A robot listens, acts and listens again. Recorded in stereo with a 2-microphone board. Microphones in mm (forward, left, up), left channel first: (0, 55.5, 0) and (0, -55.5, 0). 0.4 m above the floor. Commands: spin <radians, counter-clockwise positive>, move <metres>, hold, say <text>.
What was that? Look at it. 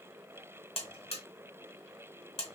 spin 1.22
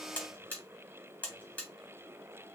spin 0.26
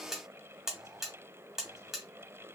say Found it: a buzzer, straight ahead, 1 to 2 m away.